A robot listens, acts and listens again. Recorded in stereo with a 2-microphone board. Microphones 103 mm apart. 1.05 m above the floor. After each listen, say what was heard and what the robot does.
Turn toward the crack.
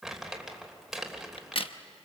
The crack: about 60° left or 120° left. Turn 60° left.
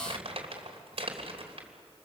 Keep listening.
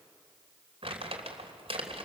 I heard a crack, but can't make it out now. It was about straight ahead or 60° left.